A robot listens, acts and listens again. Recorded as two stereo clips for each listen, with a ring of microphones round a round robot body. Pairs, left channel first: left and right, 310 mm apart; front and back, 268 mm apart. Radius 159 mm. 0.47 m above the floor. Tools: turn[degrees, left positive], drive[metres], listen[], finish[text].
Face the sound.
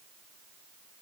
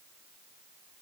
Action: listen[]
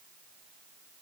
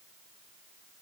Action: listen[]
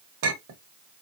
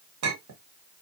Thought: The clink: 140° right.
Action: turn[-140]
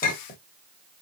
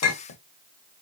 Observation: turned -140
Thought: The clink is now 25° left.
Action: turn[25]
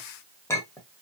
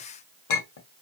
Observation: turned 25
Thought: The clink is now 10° left.
Action: turn[10]
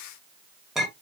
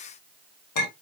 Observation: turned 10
Action: finish[Facing the clink, 1 to 2 m away.]